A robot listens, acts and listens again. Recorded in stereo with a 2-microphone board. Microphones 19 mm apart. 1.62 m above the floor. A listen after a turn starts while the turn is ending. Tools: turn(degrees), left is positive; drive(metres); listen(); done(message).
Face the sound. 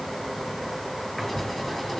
turn(degrees=20)
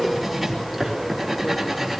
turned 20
done("Facing the writing, over 4 m away.")